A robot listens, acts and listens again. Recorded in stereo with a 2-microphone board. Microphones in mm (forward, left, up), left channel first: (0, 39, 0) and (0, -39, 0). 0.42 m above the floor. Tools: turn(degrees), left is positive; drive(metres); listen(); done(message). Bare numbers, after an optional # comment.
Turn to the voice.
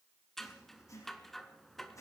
listen()
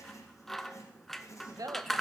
# The woman speaking: about 55° right or 125° right.
turn(-55)
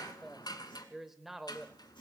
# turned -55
done("Facing the woman speaking.")